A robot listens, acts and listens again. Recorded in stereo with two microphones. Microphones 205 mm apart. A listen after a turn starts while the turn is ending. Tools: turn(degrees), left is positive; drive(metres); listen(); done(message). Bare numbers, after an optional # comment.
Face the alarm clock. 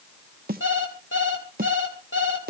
# The alarm clock: about 70° left or 110° left.
turn(70)
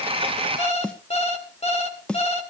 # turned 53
# So it is at 35° left.
turn(35)
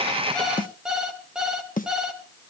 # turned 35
done("Facing the alarm clock, 2 to 4 m away.")